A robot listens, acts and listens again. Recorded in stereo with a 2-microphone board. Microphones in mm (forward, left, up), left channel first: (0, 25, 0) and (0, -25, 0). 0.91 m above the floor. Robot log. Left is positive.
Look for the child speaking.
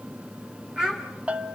note: The child speaking: about 15° right or 165° right.
cmd yaw -15
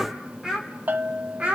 note: The child speaking: about 25° right or 155° right.
cmd yaw -25
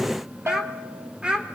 note: The child speaking: about 20° right or 160° right.
cmd yaw -20
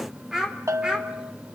note: The child speaking: about 15° right or 165° right.
cmd yaw -15
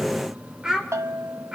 cmd yaw -30
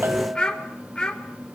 note: So it is at 15° left.
cmd yaw +15
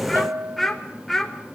end: Facing the child speaking.